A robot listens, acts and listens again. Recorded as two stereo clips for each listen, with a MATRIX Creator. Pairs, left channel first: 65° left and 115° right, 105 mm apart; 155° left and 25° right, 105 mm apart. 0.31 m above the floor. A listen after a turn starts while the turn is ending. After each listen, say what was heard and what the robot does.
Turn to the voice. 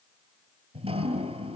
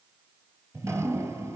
Keep listening.
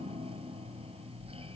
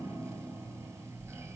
Keep listening.
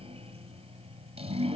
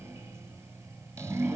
I can't make out anyone speaking, only dripping.